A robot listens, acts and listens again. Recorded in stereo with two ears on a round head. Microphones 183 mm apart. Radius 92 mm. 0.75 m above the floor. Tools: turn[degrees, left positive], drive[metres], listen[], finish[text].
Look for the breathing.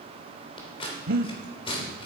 Thought: The breathing: about 50° right or 130° right.
Action: turn[-50]
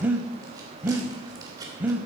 Thought: So it is at 10° right.
Action: turn[-10]
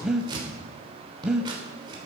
Action: finish[Facing the breathing, under 1 m away.]